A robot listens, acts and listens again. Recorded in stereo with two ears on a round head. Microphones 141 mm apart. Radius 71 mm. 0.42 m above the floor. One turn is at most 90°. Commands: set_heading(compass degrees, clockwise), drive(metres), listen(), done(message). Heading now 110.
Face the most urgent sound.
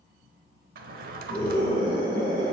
set_heading(145)
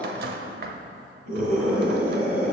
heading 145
set_heading(235)
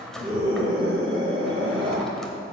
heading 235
set_heading(270)
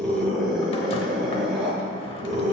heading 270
done("Facing the scream.")